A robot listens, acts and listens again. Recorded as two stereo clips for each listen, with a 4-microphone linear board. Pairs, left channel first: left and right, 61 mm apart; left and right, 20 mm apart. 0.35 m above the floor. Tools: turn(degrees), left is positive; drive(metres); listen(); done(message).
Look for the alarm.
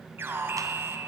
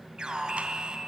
turn(degrees=-40)
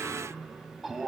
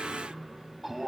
done("Facing the alarm, 2 to 4 m away.")